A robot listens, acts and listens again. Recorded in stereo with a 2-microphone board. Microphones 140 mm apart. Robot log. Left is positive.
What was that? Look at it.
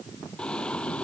cmd yaw +30
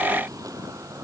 note: So it is at 25° right.
cmd yaw -25
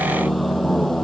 end: Facing the singing.